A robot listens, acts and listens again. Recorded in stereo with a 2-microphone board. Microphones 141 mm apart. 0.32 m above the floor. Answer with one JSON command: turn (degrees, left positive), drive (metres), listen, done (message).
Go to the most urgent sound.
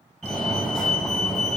{"turn": 30}
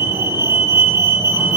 {"turn": -25}
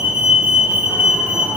{"turn": -10}
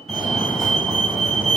{"drive": 1.0}
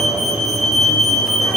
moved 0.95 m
{"drive": 1.0}
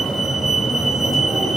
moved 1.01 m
{"drive": 1.0}
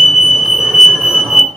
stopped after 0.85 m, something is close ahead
{"turn": -10}
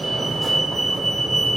{"done": "I am next to the fire alarm."}